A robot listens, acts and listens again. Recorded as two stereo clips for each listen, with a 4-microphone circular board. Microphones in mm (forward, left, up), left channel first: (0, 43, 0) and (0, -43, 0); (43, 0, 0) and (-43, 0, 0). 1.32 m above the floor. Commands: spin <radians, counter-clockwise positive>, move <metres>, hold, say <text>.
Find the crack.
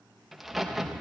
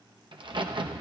spin 3.14
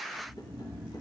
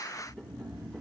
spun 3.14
say I heard a crack from this way, but can't make it out now.